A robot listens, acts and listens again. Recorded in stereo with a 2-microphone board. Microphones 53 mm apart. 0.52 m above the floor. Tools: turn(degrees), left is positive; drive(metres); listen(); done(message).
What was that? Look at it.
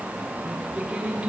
turn(degrees=-15)
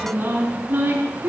turn(degrees=-35)
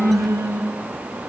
turn(degrees=-110)
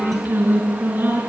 turn(degrees=-40)
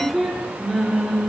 done("Facing the singing.")